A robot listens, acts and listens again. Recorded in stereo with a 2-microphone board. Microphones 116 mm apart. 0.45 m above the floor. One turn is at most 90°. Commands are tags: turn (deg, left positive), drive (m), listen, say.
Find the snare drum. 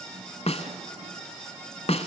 <turn deg="65"/>
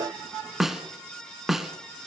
<say>Facing the snare drum.</say>